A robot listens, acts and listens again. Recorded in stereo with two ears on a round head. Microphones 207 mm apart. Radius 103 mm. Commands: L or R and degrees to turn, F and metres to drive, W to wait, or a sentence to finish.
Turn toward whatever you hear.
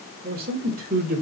R40
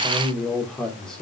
Facing the man speaking, 2 to 4 m away.